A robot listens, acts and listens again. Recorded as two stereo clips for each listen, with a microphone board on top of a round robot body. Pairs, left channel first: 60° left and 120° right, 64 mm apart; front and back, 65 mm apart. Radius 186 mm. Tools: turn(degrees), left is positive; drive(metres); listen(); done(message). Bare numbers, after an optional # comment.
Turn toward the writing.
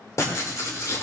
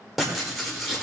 # The writing: 90° left.
turn(90)
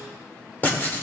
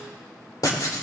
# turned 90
done("Facing the writing, 2 to 4 m away.")